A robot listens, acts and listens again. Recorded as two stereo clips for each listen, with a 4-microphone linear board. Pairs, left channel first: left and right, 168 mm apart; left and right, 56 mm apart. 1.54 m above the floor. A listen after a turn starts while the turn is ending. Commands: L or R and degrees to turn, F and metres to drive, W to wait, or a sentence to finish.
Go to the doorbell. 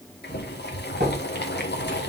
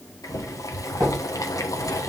R90
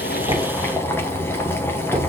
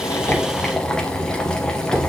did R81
R10
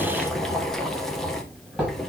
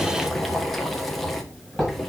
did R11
F1.0
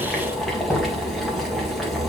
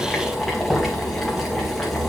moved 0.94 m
R10
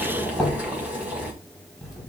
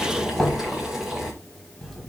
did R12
F1.0
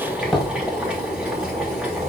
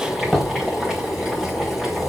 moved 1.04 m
F1.0
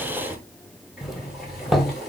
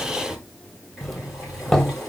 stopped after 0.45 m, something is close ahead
I am next to the doorbell.